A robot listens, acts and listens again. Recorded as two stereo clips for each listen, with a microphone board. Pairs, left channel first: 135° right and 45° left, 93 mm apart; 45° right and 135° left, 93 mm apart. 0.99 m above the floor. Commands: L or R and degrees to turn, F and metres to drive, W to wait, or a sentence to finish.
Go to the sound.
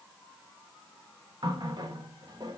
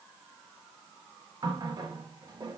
L90
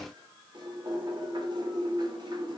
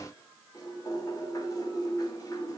F1.0
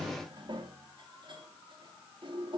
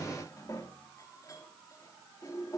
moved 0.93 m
L10
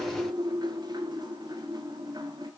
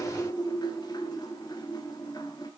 F1.0
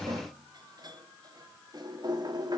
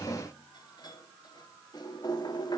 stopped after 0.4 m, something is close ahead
Arrived at the running tap, straight ahead.